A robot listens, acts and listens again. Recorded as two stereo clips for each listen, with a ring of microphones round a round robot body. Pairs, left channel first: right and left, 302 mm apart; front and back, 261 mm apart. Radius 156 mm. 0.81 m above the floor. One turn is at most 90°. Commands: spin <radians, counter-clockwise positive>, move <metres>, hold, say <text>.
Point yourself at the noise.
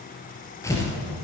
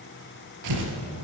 spin -1.57
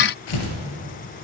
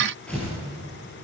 spin -1.48
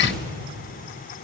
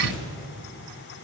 say Found it: tearing paper, straight ahead, 2 to 4 m away.